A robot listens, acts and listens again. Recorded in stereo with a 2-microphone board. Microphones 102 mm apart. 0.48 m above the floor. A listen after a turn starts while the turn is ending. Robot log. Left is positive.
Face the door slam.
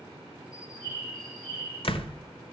note: The door slam: about 60° left or 120° left.
cmd yaw +60
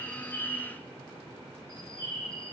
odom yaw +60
cmd idle
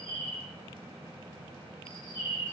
end: I heard a door slam, but can't make it out now. It was about straight ahead or 60° left.